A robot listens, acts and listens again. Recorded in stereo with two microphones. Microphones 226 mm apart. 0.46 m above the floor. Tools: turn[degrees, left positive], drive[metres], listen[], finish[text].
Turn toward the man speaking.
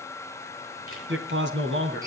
Thought: The man speaking: about 55° right or 125° right.
Action: turn[-55]
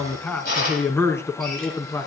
Thought: So it is at 15° left.
Action: turn[15]
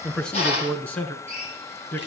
Thought: The man speaking is now 10° left.
Action: turn[10]
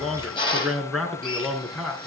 Action: finish[Found it: a man speaking, straight ahead.]